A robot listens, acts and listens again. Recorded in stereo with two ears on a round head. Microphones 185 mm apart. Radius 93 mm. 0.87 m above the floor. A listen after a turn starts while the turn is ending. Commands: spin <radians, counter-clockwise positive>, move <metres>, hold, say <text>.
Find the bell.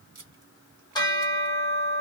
spin 0.35
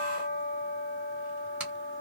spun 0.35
spin 2.36
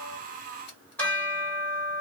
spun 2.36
spin 0.17
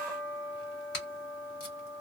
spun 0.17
say Facing the bell.